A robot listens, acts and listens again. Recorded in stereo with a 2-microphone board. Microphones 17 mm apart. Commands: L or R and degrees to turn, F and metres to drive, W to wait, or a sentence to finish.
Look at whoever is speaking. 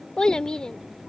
L60
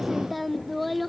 Facing the child speaking.